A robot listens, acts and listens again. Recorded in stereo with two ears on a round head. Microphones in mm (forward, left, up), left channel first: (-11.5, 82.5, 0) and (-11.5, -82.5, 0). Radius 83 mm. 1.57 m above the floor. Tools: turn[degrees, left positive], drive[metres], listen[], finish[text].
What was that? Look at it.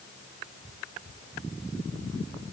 Action: listen[]
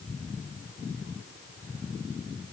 Action: listen[]
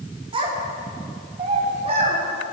Thought: The child speaking: about 35° right or 145° right.
Action: turn[-35]
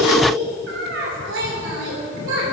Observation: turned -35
Thought: So it is at 110° right.
Action: turn[-110]
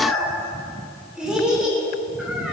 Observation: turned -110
Action: finish[Found it: a child speaking, straight ahead, over 4 m away.]